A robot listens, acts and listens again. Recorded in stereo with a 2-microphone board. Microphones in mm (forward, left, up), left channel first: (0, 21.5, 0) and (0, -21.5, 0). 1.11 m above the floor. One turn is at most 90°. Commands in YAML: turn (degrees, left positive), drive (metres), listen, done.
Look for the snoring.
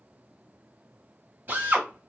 listen: true
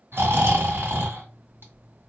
turn: -60
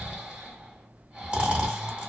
turn: -30
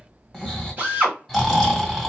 done: "Facing the snoring."